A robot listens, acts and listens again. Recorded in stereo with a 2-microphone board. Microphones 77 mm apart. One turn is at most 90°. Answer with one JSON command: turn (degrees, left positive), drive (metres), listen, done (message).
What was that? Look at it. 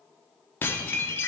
{"turn": 30}
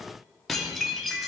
{"done": "Facing the dishes clattering, 1 to 2 m away."}